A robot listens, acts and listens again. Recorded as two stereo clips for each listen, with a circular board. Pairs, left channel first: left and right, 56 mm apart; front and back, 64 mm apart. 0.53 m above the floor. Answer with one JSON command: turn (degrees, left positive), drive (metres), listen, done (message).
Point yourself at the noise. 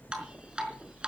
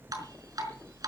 {"turn": -160}
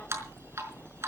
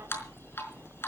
{"turn": -50}
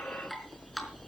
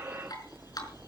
{"listen": true}
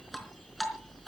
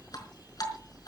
{"done": "Facing the dripping, over 4 m away."}